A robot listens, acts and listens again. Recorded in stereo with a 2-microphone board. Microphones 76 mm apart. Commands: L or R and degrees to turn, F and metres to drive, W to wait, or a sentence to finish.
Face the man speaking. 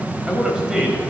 R30
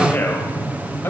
L30
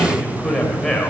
L10
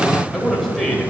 Facing the man speaking.